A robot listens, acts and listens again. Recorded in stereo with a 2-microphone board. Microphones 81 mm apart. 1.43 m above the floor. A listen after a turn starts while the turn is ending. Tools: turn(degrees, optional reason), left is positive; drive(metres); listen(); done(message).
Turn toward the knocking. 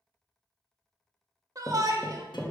turn(degrees=30)
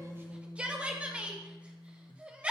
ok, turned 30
listen()
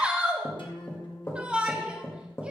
turn(degrees=150, reason="So it is at 150° left.")
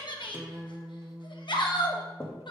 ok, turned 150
turn(degrees=25, reason="The knocking is now 25° left.")
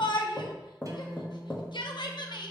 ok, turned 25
turn(degrees=20, reason="The knocking is now 20° left.")
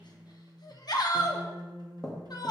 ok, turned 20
turn(degrees=10, reason="The knocking is now 10° left.")
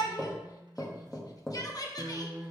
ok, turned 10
done("Facing the knocking.")